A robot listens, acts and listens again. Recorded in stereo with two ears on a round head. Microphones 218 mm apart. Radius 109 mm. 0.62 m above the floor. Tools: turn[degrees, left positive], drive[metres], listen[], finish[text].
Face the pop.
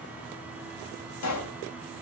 Action: turn[90]
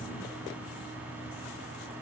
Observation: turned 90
Action: finish[I heard a pop from this way, but can't make it out now.]